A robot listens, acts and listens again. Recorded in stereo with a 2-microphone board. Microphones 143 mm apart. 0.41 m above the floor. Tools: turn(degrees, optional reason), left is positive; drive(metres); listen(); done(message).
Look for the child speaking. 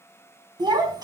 turn(degrees=-30, reason="The child speaking: about 30° right or 150° right.")
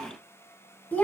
turn(degrees=15, reason="So it is at 15° left.")
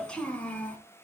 turn(degrees=10, reason="The child speaking is now 10° left.")
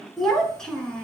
done("Found it: a child speaking, straight ahead.")